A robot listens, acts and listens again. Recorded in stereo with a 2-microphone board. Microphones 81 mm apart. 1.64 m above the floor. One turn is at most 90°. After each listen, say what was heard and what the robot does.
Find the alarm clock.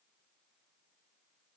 Keep listening.
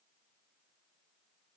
Keep listening.
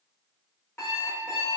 The alarm clock: about 30° left or 150° left. Turn 30° left.
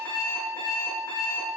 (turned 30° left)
So it is at 120° left. Turn 90° left.
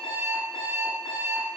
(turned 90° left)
The alarm clock is now 50° left. Turn 50° left.
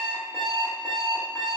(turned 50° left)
Facing the alarm clock.